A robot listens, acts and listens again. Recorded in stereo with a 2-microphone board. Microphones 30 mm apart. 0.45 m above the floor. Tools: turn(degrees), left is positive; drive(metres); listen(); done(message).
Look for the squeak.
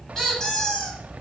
turn(degrees=15)
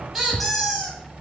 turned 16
done("Found it: a squeak, straight ahead, over 4 m away.")